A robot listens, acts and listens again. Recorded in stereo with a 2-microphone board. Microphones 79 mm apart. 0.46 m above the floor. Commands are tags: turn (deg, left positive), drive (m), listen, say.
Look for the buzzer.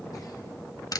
<listen/>
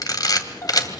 <listen/>
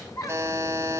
<turn deg="-35"/>
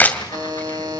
<turn deg="-105"/>
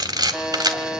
<turn deg="-10"/>
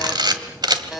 <say>Facing the buzzer, 2 to 4 m away.</say>